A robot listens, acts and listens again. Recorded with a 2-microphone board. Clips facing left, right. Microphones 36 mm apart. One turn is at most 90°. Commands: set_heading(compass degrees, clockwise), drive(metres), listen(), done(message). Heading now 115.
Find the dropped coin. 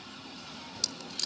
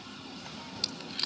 set_heading(140)
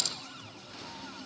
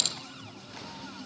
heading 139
set_heading(229)
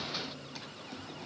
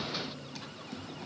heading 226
set_heading(261)
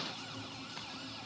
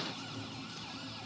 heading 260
done("Facing where the dropped coin came from. I can't hear it now.")